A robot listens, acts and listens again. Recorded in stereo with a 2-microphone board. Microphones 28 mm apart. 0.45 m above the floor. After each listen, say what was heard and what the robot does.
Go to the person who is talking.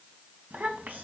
Turn 90° right.
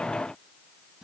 Keep listening.
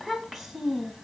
The child speaking is now 10° right. Turn 10° right.
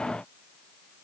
Keep listening.
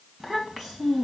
Drive 1.0 m forward.
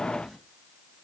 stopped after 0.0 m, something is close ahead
Keep listening.
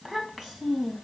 Blocked. The child speaking is further on, straight ahead.